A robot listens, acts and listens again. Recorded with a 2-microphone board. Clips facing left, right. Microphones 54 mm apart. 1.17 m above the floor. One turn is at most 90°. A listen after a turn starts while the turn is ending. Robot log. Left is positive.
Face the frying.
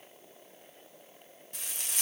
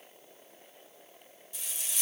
note: The frying: about 55° left or 125° left.
cmd yaw +55
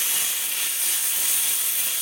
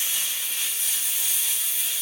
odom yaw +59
note: So it is at 65° left.
cmd yaw +65
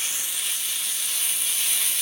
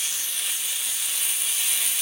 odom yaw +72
end: Found it: frying, straight ahead.